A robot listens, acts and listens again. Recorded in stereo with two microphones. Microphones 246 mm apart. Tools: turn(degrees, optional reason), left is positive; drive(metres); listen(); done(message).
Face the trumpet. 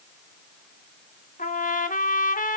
turn(degrees=35, reason="The trumpet: about 35° left or 145° left.")
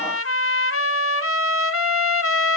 turn(degrees=110, reason="So it is at 110° left.")
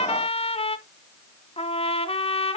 turn(degrees=25, reason="The trumpet is now 25° left.")
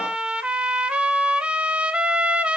done("Facing the trumpet.")